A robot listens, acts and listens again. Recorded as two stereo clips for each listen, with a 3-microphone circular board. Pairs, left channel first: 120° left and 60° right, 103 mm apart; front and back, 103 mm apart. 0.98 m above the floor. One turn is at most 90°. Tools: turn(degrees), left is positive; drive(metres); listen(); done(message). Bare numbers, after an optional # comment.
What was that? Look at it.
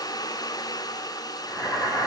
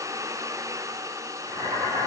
# The boiling: straight behind.
turn(90)
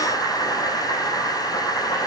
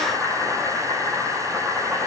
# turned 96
# The boiling is now 80° left.
turn(80)
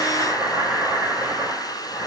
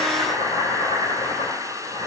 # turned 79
done("Facing the boiling, 2 to 4 m away.")